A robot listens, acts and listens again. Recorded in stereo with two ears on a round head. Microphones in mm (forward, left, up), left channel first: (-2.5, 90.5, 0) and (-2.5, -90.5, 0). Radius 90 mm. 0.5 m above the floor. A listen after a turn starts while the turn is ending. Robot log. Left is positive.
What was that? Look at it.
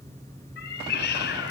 note: The cat meowing: about 50° left or 130° left.
cmd yaw +50
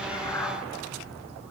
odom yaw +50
cmd idle
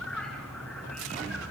end: Facing the cat meowing.